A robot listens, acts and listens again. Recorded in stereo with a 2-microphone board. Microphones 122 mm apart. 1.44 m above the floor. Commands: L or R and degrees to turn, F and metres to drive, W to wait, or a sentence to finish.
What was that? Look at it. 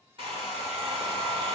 R45
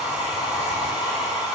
R10
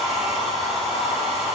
Facing the hair dryer, 1 to 2 m away.